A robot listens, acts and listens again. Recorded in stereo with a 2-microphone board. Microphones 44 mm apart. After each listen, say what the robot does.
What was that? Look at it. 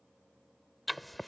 Turn 30° left.
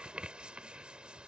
Turn 30° right.
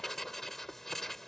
Turn 10° left.
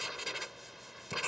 Facing the writing.